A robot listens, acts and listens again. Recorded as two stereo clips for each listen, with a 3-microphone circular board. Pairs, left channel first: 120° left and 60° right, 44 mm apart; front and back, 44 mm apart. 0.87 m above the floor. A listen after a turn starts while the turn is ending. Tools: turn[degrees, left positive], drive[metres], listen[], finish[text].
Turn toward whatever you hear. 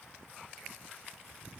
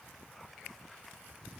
Action: listen[]
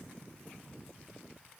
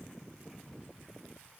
Action: listen[]
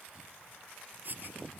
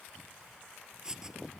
Thought: The writing: 105° right.
Action: turn[-105]
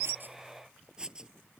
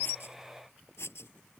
Thought: The writing is now 10° left.
Action: turn[10]
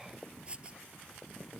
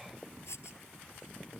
Action: listen[]
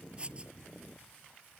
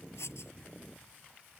Action: finish[Found it: writing, straight ahead.]